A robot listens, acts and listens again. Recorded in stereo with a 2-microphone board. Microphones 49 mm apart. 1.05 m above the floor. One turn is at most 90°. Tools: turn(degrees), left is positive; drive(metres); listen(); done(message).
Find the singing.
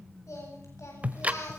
turn(degrees=90)
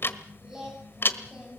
turn(degrees=-15)
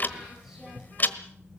listen()
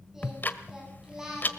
turn(degrees=-10)
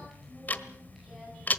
listen()
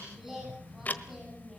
done("Facing the singing, over 4 m away.")